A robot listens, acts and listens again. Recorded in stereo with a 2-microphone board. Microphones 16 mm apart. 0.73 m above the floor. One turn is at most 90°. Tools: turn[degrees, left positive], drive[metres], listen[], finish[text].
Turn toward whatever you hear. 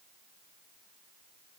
Action: listen[]
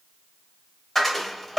Action: turn[30]
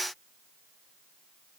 Action: listen[]
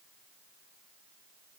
Action: finish[I heard a dropped coin, but can't make it out now. It was about 20° right or 140° left.]